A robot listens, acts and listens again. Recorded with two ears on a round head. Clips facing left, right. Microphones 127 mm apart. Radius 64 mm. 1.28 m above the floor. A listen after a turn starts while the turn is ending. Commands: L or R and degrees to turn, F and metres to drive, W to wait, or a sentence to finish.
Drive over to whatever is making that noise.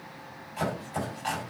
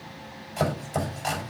R60
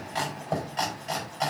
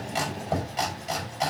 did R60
F1.0
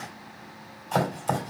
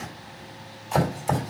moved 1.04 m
F1.0
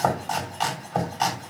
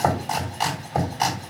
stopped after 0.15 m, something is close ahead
R10
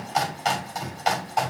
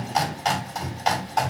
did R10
Blocked. The chopping is further on, straight ahead.